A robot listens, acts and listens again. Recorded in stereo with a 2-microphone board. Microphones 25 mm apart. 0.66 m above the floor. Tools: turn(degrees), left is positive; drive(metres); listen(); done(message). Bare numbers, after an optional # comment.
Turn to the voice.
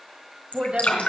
# The woman speaking: about 55° right or 125° right.
turn(-55)
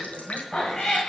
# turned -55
# So it is at 60° right.
turn(-60)
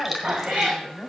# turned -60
# The woman speaking is now 25° left.
turn(25)
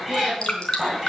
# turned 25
listen()
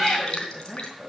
# The woman speaking is now 15° right.
turn(-15)
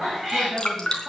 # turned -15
done("Facing the woman speaking.")